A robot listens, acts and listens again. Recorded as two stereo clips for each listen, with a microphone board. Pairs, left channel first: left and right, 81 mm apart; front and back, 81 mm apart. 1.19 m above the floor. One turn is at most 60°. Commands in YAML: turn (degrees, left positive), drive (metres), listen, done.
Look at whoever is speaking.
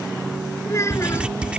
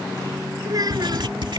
turn: 60
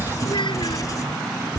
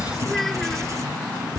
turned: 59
turn: 60
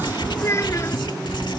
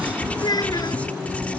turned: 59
turn: 35
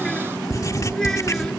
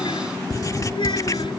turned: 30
listen: true
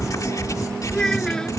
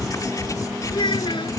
turn: 10
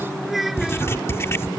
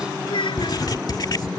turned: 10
done: "Facing the child speaking."